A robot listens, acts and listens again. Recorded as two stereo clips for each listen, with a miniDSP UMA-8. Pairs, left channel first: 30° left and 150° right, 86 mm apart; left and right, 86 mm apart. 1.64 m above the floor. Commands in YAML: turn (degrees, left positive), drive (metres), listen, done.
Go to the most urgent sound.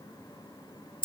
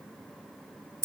listen: true
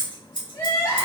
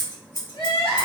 turn: 90
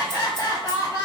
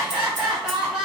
turn: -10
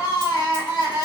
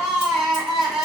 drive: 1.0
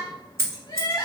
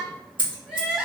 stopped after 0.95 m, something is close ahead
turn: -10
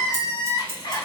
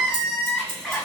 done: "I am next to the crying."